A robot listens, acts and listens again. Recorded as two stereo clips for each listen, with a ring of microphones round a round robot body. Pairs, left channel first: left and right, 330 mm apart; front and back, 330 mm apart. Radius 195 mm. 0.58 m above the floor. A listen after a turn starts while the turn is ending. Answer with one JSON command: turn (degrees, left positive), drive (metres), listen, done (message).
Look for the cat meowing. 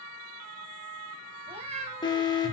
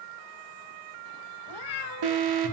{"turn": -20}
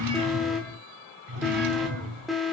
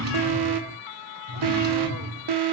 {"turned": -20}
{"listen": true}
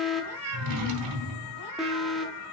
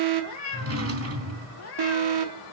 {"turn": -45}
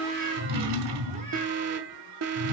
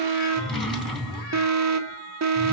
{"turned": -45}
{"listen": true}
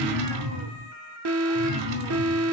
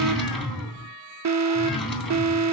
{"listen": true}
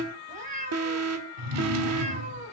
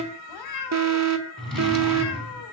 {"turn": -20}
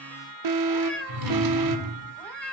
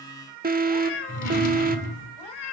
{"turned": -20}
{"done": "Facing the cat meowing, 2 to 4 m away."}